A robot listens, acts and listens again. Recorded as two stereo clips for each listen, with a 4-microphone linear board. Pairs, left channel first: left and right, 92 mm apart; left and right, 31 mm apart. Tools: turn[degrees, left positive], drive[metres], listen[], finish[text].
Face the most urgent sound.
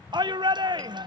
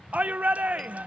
Thought: The shout: about 50° right or 130° right.
Action: turn[-50]
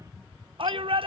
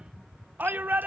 Thought: So it is at 75° right.
Action: turn[-75]
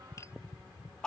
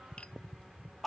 Thought: The shout is now 10° left.
Action: turn[10]
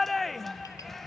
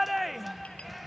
Action: finish[Found it: a shout, straight ahead.]